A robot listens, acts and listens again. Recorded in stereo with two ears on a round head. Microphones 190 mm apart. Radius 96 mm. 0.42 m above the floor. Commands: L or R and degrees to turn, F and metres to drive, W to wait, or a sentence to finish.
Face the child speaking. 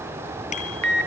W
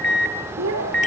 R70
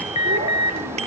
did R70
W
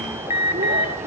W
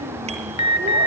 I heard a child speaking, but can't make it out now. It was about straight ahead or 40° right.